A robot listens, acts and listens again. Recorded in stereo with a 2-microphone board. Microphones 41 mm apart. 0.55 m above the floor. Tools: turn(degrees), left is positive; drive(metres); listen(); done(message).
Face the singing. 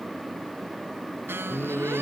turn(degrees=60)
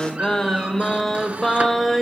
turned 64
done("Facing the singing, 2 to 4 m away.")